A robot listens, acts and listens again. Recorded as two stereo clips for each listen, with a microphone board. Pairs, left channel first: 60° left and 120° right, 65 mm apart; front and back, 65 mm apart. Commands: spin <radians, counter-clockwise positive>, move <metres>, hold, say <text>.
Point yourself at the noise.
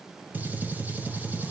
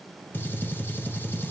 spin -0.96
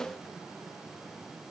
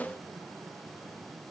say I heard a gunshot from this way, but can't make it out now.